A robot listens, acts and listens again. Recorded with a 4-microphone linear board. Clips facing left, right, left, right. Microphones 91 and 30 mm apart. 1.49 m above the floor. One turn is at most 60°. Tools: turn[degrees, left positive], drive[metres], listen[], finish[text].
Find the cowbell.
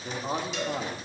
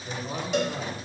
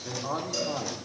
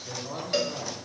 Thought: The cowbell: about 55° right or 125° right.
Action: turn[-55]
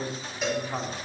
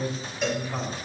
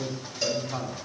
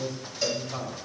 Action: finish[Found it: a cowbell, straight ahead, 1 to 2 m away.]